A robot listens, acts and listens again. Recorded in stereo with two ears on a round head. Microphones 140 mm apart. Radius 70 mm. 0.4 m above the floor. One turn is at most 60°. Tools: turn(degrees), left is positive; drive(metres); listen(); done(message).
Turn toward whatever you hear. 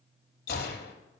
turn(degrees=60)
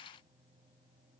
listen()
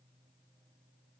done("I heard a gunshot, but can't make it out now. It was about 5° left or 55° left.")